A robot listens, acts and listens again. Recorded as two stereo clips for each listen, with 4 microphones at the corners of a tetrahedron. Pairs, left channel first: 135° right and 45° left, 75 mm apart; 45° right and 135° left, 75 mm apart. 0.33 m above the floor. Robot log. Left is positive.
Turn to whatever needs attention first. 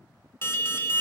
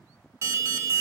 note: The alarm: 175° left.
cmd yaw +175
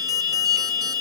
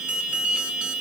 note: The alarm is now 65° left.
cmd yaw +65
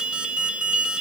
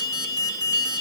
note: The alarm is now 30° right.
cmd yaw -30
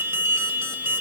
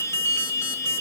end: Facing the alarm.